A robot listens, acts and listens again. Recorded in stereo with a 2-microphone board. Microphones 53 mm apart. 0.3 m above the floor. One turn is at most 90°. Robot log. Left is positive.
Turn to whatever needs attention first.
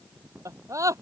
cmd yaw -90
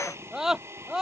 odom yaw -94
note: So it is at 10° right.
cmd yaw -10
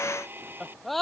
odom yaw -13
end: Found it: a scream, straight ahead.